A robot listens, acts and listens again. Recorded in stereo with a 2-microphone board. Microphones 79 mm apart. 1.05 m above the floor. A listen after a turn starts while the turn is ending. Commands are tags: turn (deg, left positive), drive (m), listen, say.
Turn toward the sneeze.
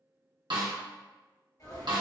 <turn deg="55"/>
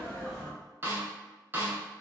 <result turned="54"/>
<say>Facing the sneeze.</say>